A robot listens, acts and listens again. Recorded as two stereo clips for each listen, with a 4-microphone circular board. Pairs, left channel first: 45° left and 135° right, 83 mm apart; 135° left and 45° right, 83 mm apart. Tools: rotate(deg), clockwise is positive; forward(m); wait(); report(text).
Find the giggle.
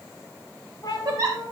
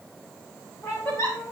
rotate(175)
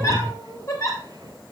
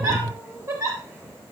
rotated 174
report("Found it: a giggle, straight ahead.")